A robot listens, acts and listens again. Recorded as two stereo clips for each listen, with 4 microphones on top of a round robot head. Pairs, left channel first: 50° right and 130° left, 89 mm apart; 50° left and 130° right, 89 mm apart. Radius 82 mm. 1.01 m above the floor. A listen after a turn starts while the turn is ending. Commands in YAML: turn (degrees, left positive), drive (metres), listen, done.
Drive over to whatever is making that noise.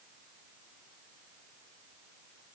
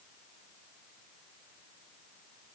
listen: true
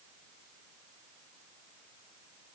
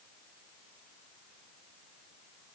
listen: true
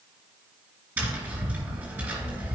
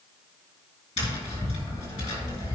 turn: 65
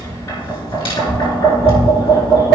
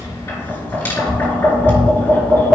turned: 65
turn: -15
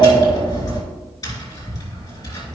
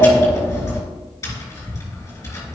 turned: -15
drive: 1.0
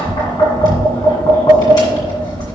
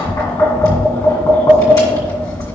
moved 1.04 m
drive: 1.0
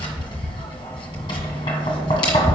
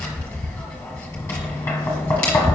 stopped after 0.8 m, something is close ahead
turn: -10
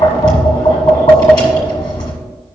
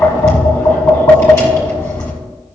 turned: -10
done: "Arrived at the tapping, straight ahead."